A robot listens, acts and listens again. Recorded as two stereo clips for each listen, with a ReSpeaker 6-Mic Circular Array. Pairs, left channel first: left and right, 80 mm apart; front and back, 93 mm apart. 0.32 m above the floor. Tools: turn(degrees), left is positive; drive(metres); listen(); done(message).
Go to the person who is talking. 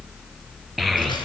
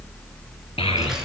drive(metres=1.0)
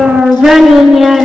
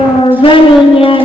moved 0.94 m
drive(metres=1.0)
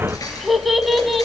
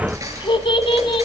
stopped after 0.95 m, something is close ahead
done("I am next to the child speaking.")